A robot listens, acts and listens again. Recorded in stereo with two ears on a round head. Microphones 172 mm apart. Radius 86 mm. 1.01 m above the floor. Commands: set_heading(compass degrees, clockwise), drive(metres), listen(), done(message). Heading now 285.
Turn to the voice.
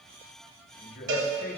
set_heading(235)
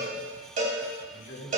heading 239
set_heading(154)
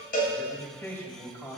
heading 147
set_heading(132)
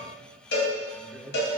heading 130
done("Found it: a man speaking, straight ahead, over 4 m away.")